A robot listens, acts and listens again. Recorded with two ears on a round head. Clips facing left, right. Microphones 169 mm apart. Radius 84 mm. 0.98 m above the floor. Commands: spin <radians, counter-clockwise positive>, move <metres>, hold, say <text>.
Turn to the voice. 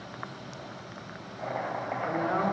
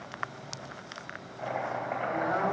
spin 0.70
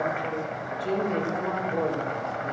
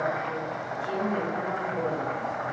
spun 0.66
spin 1.75
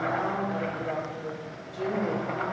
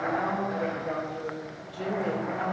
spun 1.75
say Found it: a man speaking, straight ahead.